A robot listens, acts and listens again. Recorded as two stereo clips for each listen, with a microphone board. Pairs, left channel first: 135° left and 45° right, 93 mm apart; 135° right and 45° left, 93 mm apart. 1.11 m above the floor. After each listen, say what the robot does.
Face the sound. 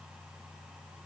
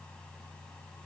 Keep listening.
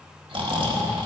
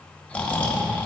Turn 60° right.
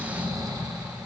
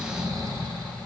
Facing the snoring, 1 to 2 m away.